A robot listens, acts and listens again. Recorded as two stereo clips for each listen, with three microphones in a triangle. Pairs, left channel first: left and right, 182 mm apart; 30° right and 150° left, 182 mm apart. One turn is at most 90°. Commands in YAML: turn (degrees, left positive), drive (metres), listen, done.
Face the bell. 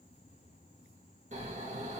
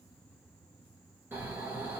listen: true
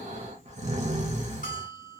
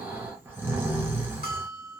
turn: 90
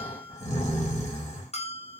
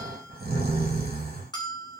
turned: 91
turn: 35
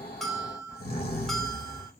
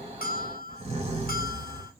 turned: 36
done: "Found it: a bell, straight ahead, under 1 m away."